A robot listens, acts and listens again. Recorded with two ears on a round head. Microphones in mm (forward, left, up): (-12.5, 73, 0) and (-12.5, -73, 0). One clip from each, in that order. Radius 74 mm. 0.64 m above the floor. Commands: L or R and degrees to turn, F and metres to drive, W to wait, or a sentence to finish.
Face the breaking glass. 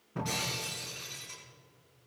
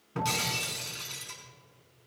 R60
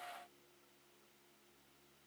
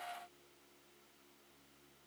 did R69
W
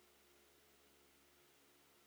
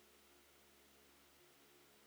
I heard breaking glass, but can't make it out now. It was about 5° left or 50° right.